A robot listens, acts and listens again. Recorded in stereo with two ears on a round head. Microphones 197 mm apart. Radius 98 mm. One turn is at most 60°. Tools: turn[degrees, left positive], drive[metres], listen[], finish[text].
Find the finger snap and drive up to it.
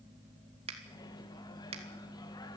Thought: The finger snap: about 25° right or 155° right.
Action: turn[-25]
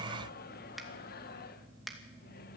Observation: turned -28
Action: drive[1.0]
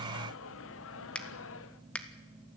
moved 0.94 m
Action: drive[1.0]
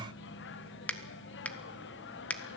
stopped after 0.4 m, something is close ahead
Action: finish[I am next to the finger snap.]